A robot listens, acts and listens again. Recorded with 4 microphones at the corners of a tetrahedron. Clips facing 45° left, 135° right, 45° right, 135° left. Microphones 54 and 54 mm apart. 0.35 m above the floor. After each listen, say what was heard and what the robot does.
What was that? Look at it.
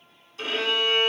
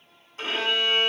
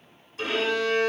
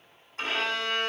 The violin: 175° left. Turn 175° left.
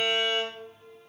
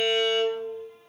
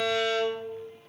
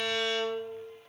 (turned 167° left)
The violin is now 10° left. Turn 10° left.
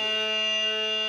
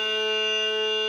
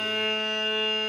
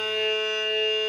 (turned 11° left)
Found it: a violin, straight ahead, 1 to 2 m away.